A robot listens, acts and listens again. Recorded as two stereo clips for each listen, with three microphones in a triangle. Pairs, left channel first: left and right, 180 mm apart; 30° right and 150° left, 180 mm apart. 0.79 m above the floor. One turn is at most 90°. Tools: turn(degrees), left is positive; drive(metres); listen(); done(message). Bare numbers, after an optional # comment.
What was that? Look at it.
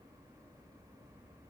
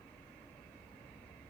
listen()
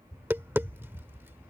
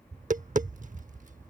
# The tapping: 165° right.
turn(-90)
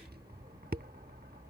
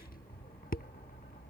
# The tapping is now 65° right.
turn(-65)
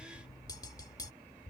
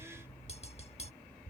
# The tapping is now 20° left.
turn(20)
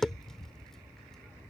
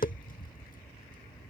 done("Found it: tapping, straight ahead.")